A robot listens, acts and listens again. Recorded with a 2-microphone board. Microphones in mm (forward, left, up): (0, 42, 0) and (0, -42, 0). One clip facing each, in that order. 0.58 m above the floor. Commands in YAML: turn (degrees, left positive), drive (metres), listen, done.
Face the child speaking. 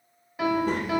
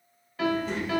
turn: 55
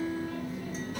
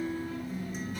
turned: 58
turn: 65
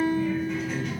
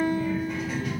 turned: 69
done: "Found it: a child speaking, straight ahead, under 1 m away."